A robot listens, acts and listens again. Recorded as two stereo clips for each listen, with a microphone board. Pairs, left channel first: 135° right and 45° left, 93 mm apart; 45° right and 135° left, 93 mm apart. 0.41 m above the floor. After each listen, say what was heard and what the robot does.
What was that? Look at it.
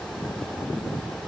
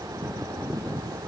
Keep listening.
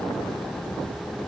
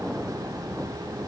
Keep listening.
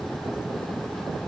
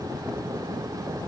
I can't make out anything.